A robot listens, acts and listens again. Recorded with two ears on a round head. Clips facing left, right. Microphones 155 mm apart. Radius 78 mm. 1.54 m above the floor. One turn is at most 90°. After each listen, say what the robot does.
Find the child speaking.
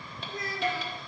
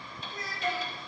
Turn 75° left.
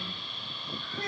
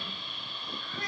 Turn 25° left.
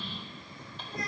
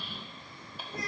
Found it: a child speaking, straight ahead, 2 to 4 m away.